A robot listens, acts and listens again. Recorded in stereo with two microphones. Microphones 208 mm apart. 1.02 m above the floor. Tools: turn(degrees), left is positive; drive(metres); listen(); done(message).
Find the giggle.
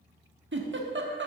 turn(degrees=-65)
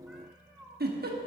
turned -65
turn(degrees=-50)
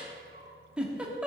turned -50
done("Facing the giggle, 1 to 2 m away.")